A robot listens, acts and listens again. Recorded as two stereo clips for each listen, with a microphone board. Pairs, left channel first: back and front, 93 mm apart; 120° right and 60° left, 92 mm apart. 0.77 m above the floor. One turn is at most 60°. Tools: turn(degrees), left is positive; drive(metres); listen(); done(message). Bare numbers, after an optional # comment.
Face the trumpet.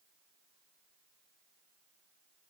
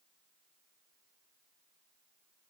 listen()
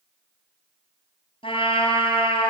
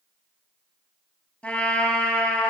# The trumpet: 160° left.
turn(60)
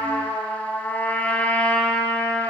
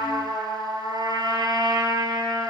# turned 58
# The trumpet is now 100° left.
turn(60)
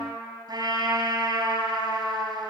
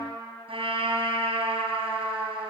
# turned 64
# The trumpet is now 40° left.
turn(40)
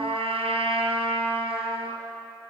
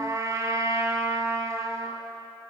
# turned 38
done("Facing the trumpet, over 4 m away.")